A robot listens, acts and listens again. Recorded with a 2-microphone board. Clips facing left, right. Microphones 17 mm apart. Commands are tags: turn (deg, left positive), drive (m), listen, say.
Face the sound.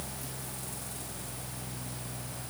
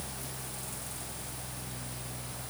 <listen/>
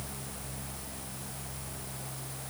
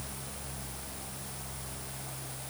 <listen/>
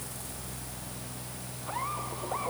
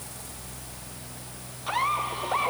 <turn deg="-70"/>
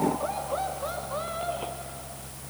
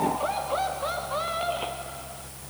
<turn deg="-35"/>
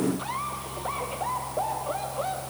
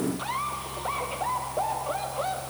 <turn deg="-15"/>
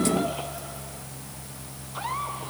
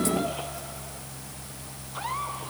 <listen/>
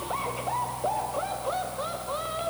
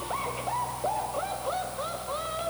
<say>Facing the laughter.</say>